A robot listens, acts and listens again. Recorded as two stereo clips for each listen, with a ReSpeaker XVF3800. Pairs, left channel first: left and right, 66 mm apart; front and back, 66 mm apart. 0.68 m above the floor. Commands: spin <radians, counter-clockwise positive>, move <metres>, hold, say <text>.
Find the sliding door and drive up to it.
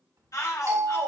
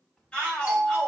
spin -1.48
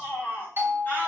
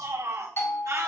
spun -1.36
spin -0.17
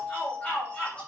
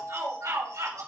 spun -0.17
hold
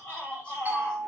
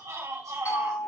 say Facing where the sliding door came from. I can't hear it now. I did not reach it.